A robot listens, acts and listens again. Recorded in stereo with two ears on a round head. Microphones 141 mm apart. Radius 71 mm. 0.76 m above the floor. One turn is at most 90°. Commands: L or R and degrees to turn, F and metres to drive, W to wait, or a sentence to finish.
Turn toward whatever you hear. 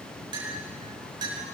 R30
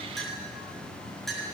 Facing the clink.